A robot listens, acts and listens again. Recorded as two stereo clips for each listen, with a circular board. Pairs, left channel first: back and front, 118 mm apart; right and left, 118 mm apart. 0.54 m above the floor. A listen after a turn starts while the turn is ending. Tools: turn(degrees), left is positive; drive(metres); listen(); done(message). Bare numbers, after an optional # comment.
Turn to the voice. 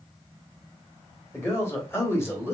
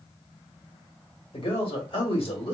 # The man speaking: 115° right.
turn(-115)
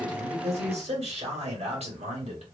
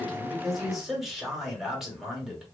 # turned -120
done("Facing the man speaking, 1 to 2 m away.")